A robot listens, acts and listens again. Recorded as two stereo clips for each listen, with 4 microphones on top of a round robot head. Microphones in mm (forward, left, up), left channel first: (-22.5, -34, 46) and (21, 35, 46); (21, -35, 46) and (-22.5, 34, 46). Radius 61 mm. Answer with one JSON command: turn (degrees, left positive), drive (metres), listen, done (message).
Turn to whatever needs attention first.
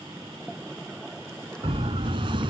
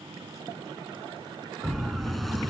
{"turn": 30}
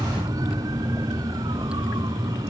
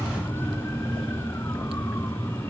{"turn": 10}
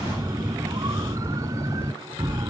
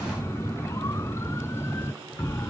{"done": "Facing the siren."}